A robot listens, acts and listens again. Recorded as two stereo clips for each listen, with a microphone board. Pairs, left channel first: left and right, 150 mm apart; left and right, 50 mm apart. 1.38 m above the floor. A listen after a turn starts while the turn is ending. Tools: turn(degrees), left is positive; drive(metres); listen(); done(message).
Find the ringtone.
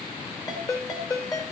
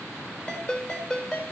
turn(degrees=25)
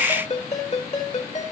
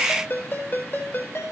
turn(degrees=125)
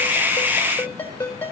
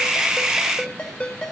turn(degrees=15)
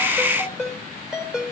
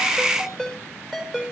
done("Found it: a ringtone, straight ahead, 2 to 4 m away.")